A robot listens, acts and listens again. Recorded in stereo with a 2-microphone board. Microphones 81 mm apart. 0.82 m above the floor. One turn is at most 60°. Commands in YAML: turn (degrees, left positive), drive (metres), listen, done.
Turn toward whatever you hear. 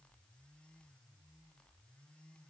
listen: true
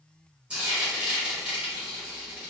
turn: -15
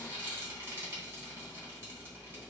turn: -60
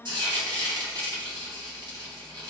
turn: -60
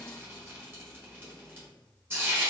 turn: -25
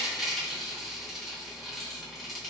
done: "Found it: frying, straight ahead."